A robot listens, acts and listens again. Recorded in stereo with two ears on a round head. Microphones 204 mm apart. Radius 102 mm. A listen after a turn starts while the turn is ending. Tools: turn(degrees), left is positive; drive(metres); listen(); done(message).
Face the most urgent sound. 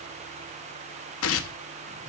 listen()
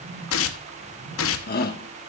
turn(degrees=40)
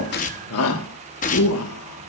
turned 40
turn(degrees=95)
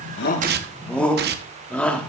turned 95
done("Facing the shout.")